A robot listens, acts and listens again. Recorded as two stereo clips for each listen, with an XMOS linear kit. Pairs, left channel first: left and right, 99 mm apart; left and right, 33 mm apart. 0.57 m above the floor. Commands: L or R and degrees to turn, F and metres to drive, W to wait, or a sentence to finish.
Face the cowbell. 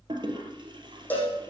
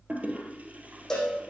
L15
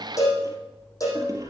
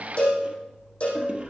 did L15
L145
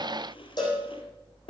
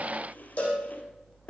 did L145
L45
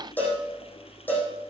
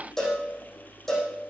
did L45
L15
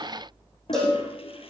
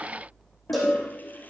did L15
Found it: a cowbell, straight ahead.